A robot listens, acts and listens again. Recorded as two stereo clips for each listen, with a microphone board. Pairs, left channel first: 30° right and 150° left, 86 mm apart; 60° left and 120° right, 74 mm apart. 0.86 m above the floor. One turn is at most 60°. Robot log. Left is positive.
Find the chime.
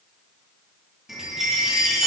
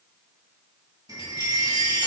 note: The chime: 125° right.
cmd yaw -60
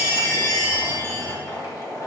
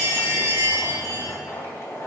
note: The chime is now 75° right.
cmd yaw -60
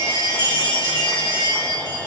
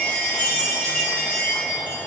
end: Found it: a chime, straight ahead, 1 to 2 m away.